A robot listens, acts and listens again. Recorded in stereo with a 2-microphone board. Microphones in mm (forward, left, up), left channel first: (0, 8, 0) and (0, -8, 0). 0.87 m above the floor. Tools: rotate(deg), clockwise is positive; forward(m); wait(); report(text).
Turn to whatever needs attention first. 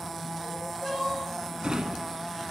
rotate(-60)
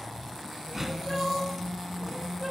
report("Found it: crying, straight ahead.")